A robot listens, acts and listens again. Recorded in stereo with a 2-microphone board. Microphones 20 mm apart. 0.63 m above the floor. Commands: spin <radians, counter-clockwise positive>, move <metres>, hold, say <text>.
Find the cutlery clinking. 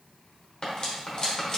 spin 0.79
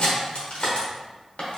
spin 1.48
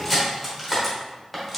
say Found it: cutlery clinking, straight ahead.